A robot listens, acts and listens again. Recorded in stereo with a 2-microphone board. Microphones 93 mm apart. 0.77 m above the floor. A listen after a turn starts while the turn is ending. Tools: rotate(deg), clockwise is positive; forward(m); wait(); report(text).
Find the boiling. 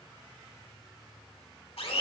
wait()
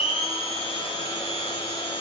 wait()
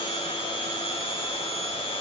report("I can't make out boiling to turn to.")